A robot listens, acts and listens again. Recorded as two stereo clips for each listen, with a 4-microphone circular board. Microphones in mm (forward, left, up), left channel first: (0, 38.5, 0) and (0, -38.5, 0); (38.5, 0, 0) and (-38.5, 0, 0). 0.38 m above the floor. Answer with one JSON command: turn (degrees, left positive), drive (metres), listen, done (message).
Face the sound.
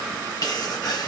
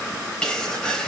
{"turn": 80}
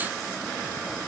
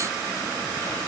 {"done": "I heard a sneeze from this way, but can't make it out now."}